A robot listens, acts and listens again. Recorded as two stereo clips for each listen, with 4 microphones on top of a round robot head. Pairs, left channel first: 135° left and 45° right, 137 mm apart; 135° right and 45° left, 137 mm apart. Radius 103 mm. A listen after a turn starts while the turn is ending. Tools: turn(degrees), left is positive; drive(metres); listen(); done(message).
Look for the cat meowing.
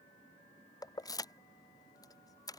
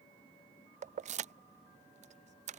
listen()
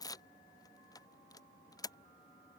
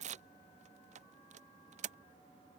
listen()
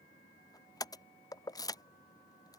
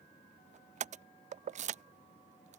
done("I can't make out a cat meowing, only keys jangling.")